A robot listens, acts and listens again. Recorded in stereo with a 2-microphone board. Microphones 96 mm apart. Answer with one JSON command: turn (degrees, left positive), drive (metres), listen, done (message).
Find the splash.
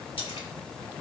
{"turn": 90}
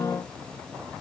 {"done": "Facing where the splash came from. I can't hear it now."}